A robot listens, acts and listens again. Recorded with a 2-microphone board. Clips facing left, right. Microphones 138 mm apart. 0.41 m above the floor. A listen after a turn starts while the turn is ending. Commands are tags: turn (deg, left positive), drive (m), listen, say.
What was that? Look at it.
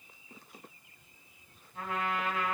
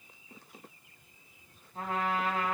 <turn deg="-35"/>
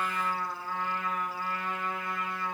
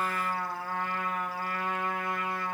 <turn deg="-110"/>
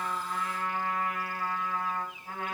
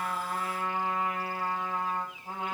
<turn deg="-25"/>
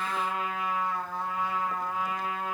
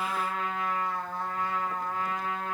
<turn deg="10"/>
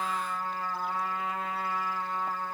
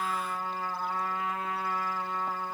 <say>Facing the trumpet.</say>